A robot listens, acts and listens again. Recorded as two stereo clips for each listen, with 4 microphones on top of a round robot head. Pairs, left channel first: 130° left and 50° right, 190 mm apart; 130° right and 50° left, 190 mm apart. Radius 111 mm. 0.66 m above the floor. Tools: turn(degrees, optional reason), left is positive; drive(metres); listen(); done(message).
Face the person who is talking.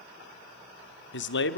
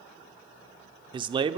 turn(degrees=115, reason="The man speaking: 115° left.")
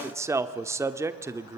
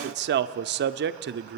turn(degrees=25, reason="The man speaking is now 25° left.")
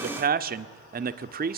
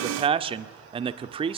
turn(degrees=-10, reason="The man speaking is now 10° right.")
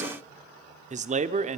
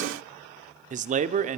done("Found it: a man speaking, straight ahead, 1 to 2 m away.")